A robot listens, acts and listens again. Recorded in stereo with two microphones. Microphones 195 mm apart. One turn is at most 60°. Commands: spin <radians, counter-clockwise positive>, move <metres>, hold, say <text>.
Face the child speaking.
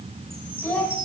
spin 0.52
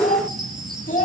spin 1.05
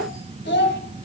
spin 1.05
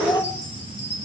spin 0.35
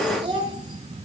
spin -0.52
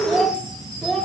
say Facing the child speaking.